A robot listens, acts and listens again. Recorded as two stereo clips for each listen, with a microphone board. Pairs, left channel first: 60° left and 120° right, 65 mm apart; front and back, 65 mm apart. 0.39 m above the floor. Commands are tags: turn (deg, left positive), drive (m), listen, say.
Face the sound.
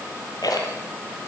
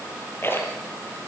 <turn deg="55"/>
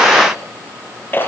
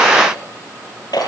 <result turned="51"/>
<say>Facing the rattle.</say>